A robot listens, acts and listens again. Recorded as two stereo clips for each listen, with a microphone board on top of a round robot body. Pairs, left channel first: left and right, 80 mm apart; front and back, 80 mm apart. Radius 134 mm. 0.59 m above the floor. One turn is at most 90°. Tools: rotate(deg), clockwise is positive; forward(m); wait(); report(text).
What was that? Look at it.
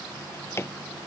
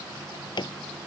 rotate(-30)
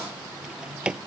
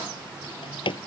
rotate(10)
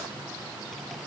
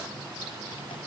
wait()
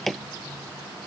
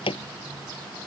report("Facing the drawer.")